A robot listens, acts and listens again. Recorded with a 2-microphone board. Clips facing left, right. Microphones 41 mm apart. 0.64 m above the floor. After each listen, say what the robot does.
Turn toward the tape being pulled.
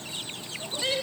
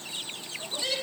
Keep listening.
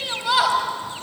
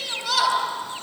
Keep listening.
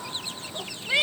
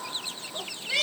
I can't make out tape being pulled to turn to.